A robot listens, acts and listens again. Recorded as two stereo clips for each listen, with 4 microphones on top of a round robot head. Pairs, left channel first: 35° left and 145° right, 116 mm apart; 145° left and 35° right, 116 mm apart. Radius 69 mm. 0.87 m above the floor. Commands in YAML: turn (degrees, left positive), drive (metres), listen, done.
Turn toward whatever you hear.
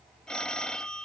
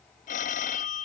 turn: 120
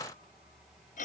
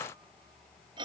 turn: 15
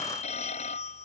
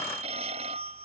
done: "Found it: a phone ringing, straight ahead."